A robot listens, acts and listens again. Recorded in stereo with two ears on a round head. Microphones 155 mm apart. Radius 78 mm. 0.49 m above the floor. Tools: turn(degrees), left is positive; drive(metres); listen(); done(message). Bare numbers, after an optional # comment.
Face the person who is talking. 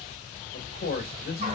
# The man speaking: about 55° left or 125° left.
turn(55)
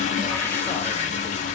listen()
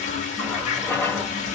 listen()
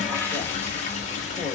done("I heard a man speaking, but can't make it out now. It was about straight ahead or 70° left.")